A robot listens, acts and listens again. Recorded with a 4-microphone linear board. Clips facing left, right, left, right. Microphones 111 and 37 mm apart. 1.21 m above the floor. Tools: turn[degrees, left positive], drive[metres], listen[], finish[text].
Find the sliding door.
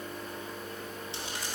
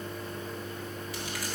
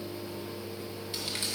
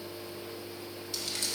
Action: listen[]
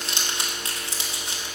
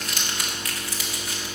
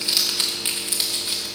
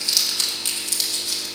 Action: listen[]
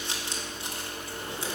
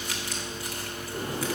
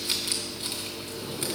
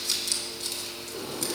Thought: The sliding door: about 45° right or 135° right.
Action: turn[-45]
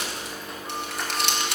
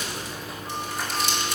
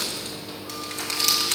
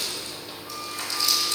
Action: listen[]
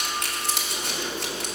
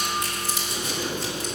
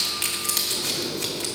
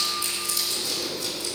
Action: finish[Facing the sliding door, 2 to 4 m away.]